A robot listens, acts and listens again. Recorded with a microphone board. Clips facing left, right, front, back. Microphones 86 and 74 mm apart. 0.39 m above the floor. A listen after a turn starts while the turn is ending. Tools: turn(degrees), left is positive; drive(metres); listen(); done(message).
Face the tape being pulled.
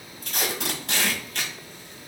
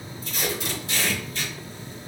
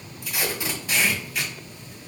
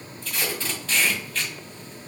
turn(degrees=75)
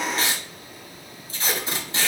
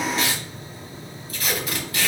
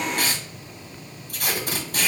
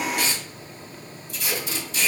turn(degrees=30)
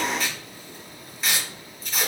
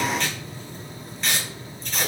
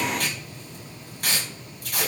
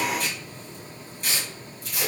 done("Found it: tape being pulled, straight ahead.")